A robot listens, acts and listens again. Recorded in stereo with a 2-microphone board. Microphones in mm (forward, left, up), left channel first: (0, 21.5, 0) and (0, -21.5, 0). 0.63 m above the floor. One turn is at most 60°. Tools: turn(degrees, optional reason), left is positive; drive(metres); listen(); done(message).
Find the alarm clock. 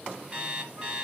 turn(degrees=-25, reason="The alarm clock: about 25° right or 155° right.")
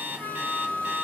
turn(degrees=-60, reason="So it is at 130° right.")
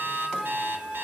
turn(degrees=-60, reason="Nothing new. It was at 70° right.")
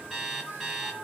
turn(degrees=-10, reason="The alarm clock is now 10° right.")
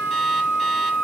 listen()
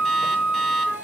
listen()
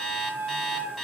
done("Found it: an alarm clock, straight ahead, 1 to 2 m away.")